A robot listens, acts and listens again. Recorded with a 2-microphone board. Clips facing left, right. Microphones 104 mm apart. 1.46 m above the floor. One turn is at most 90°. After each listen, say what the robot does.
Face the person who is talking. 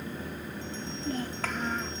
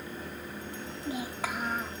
Turn 30° right.
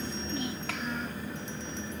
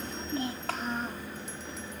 Turn 90° right.
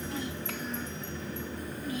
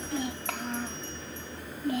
Turn 70° right.
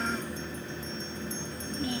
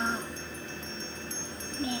Turn 25° right.
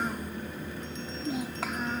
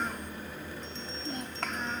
Found it: a child speaking, straight ahead.